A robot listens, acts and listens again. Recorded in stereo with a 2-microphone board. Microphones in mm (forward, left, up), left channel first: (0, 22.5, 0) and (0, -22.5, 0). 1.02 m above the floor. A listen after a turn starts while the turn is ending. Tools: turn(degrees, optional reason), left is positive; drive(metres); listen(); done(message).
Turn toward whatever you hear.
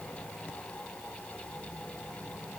listen()
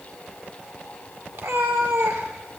turn(degrees=-90)
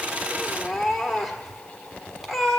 done("Facing the cat meowing, 1 to 2 m away.")